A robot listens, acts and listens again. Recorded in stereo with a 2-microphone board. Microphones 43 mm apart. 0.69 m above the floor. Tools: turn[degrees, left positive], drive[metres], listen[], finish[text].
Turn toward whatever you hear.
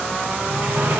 Action: turn[-90]
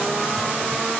Action: listen[]
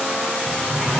Thought: The sliding door is now 10° left.
Action: turn[10]
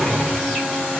Action: finish[Found it: a sliding door, straight ahead.]